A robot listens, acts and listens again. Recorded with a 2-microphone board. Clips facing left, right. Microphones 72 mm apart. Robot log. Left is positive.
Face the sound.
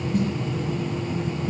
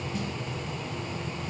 note: The snare drum: about 50° left or 130° left.
cmd yaw +50
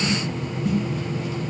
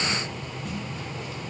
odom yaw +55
cmd idle
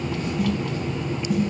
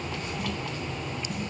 end: Found it: a snare drum, straight ahead, 1 to 2 m away.